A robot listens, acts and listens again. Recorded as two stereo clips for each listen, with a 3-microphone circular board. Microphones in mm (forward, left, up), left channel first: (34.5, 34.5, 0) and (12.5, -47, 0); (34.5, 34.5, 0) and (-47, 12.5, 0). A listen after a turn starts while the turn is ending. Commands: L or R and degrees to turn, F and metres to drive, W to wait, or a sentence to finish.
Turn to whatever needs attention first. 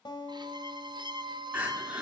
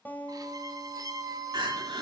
R175
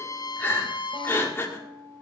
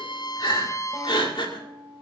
L15
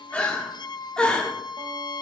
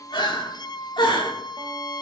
Found it: crying, straight ahead, 2 to 4 m away.